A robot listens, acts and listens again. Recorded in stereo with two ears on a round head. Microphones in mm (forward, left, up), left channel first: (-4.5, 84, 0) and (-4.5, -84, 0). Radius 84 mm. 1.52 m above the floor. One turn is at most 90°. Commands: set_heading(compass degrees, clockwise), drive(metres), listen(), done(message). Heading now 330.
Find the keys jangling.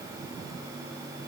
listen()
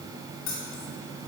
set_heading(255)
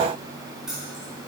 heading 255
done("Found it: keys jangling, straight ahead.")